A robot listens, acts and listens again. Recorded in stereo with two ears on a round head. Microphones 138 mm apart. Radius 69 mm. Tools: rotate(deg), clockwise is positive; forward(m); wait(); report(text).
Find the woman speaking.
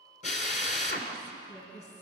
rotate(-45)
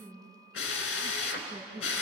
rotate(10)
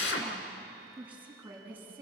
rotate(15)
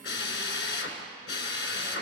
wait()
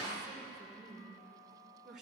report("Facing the woman speaking, over 4 m away.")